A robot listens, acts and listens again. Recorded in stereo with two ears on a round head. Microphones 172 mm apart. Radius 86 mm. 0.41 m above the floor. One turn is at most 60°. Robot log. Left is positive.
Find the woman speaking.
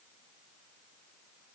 cmd idle
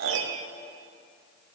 cmd idle
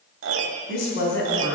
note: The woman speaking: about 70° left or 110° left.
cmd yaw +60
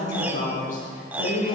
note: So it is at 50° left.
cmd yaw +50
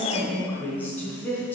note: The woman speaking is now 10° left.
cmd yaw +10
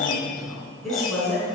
end: Facing the woman speaking.